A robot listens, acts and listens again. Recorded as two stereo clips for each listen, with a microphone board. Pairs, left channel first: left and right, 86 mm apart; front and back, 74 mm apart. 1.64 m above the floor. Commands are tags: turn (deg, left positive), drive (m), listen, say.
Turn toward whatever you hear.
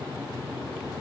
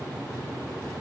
<listen/>
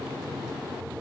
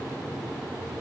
<listen/>
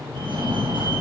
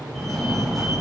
<turn deg="-85"/>
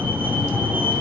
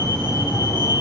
<turn deg="-20"/>
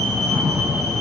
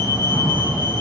<say>Found it: a fire alarm, straight ahead.</say>